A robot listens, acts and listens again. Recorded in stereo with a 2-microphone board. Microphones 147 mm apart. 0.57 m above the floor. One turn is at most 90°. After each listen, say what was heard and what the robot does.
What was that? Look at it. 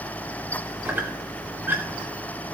Turn 30° right.
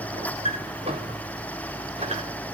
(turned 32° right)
So it is at 135° right. Turn 90° right.
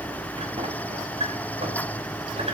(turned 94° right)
The squeak is now 40° right. Turn 40° right.
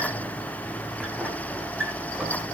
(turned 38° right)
Found it: a squeak, straight ahead.